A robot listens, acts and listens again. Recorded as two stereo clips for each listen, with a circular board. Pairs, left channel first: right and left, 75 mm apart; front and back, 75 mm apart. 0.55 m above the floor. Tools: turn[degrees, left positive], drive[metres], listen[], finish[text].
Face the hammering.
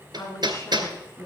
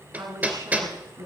Thought: The hammering: 110° left.
Action: turn[110]
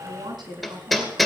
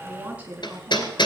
Action: finish[Facing the hammering, 2 to 4 m away.]